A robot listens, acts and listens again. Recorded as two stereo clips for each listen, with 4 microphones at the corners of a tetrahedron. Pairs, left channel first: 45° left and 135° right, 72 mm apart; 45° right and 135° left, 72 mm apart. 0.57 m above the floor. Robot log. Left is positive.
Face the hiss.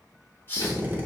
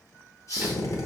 note: The hiss: 15° right.
cmd yaw -15
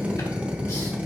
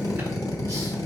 cmd idle
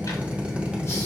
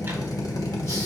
cmd idle
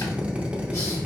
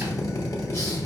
end: I heard a hiss from this way, but can't make it out now.